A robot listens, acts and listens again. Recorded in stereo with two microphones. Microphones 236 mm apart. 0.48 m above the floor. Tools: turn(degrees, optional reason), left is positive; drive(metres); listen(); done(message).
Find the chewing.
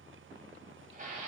listen()
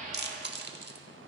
turn(degrees=-45, reason="The chewing: about 45° right or 135° right.")
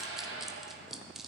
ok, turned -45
done("Found it: chewing, straight ahead, under 1 m away.")